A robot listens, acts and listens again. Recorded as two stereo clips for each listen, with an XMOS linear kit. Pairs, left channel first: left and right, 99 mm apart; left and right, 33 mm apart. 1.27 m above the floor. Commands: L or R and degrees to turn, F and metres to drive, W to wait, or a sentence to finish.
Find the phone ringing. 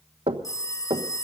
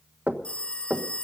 L35
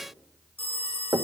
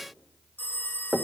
L110
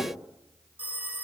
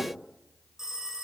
R15
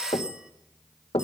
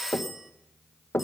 R10
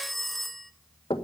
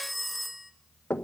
Found it: a phone ringing, straight ahead, 1 to 2 m away.